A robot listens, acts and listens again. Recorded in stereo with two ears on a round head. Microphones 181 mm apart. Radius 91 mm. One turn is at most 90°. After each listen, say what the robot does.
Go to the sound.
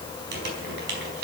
Turn 55° right.
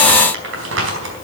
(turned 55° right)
Turn 70° right.
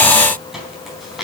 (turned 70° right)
Drive 1.0 m forward.
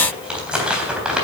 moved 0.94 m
Drive 1.0 m forward.
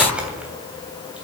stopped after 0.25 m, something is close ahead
Blocked. The crumpling is further on, straight ahead.